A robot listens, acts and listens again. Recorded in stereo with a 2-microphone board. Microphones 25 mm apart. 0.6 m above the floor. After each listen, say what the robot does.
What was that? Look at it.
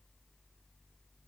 Keep listening.
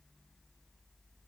Keep listening.
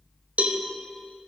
Turn 90° right.
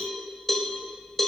Facing the cowbell, under 1 m away.